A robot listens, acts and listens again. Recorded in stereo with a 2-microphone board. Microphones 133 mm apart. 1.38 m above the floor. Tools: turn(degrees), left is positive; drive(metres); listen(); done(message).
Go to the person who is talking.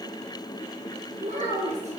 turn(degrees=-60)
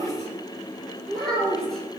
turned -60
drive(metres=1.0)
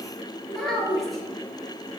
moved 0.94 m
drive(metres=1.0)
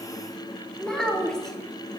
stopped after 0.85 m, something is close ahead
done("I am next to the child speaking.")